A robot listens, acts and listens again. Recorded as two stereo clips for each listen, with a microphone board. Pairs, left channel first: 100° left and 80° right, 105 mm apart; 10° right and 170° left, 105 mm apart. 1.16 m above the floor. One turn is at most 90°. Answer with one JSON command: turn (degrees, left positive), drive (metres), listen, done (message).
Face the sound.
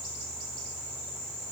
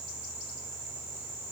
{"listen": true}
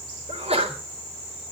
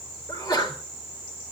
{"turn": -60}
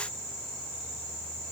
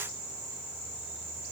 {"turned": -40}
{"turn": -20}
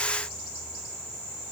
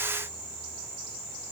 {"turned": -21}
{"done": "I heard a sneeze from this way, but can't make it out now."}